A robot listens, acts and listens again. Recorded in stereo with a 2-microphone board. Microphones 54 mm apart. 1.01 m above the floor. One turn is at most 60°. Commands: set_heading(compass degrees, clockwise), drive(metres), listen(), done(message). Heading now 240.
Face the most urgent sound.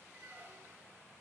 listen()
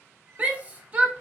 set_heading(265)
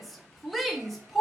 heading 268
done("Found it: a shout, straight ahead, under 1 m away.")